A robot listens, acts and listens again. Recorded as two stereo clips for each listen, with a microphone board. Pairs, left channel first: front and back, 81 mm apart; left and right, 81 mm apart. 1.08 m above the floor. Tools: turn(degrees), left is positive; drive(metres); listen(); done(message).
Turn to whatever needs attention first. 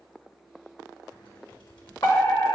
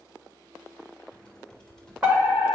turn(degrees=-25)
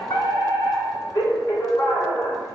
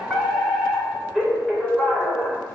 done("Found it: a fire alarm, straight ahead, 2 to 4 m away.")